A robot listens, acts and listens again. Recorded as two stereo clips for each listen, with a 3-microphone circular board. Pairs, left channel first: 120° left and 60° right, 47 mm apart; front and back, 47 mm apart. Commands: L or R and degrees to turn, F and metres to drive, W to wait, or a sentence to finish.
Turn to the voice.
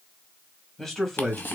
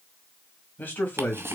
L40
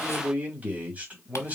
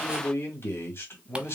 Found it: a man speaking, straight ahead, 1 to 2 m away.